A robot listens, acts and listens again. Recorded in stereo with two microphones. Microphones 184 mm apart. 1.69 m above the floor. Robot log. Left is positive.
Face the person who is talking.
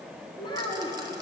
note: The child speaking: about 25° left or 155° left.
cmd yaw +25
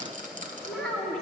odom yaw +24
end: Facing the child speaking, 2 to 4 m away.